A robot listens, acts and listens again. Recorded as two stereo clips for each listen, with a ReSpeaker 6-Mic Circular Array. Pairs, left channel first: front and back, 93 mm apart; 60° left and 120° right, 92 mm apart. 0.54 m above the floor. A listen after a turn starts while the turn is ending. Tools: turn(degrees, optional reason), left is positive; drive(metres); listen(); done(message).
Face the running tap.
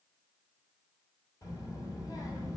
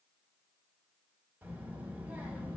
listen()
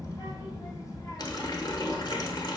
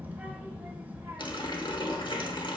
turn(degrees=40, reason="The running tap: 40° left.")
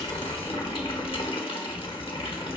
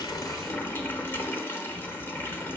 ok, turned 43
done("Facing the running tap.")